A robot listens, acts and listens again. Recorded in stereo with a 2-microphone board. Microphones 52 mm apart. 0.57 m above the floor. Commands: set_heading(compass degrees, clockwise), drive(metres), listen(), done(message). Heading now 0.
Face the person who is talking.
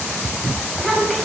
set_heading(330)
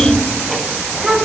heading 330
set_heading(0)
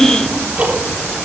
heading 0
set_heading(335)
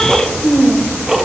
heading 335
set_heading(305)
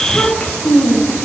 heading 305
set_heading(275)
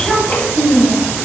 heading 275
set_heading(265)
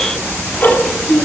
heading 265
done("Facing the child speaking.")